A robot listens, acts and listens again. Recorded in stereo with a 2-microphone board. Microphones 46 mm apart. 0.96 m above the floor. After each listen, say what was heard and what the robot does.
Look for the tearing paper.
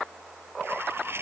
The tearing paper: about 60° right or 120° right. Turn 60° right.
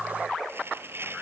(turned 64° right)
So it is at 55° right. Turn 55° right.
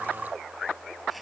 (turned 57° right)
Keep listening.
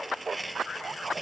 Found it: tearing paper, straight ahead.